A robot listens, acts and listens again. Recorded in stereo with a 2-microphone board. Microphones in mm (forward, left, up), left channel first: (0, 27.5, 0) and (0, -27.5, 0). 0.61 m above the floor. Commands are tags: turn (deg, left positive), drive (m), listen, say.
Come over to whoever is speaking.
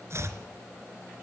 <listen/>
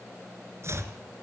<listen/>
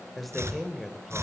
<turn deg="30"/>
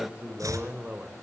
<turn deg="-25"/>
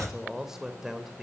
<drive m="1.0"/>
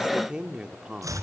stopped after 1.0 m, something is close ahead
<turn deg="-15"/>
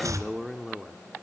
<say>I am next to the man speaking.</say>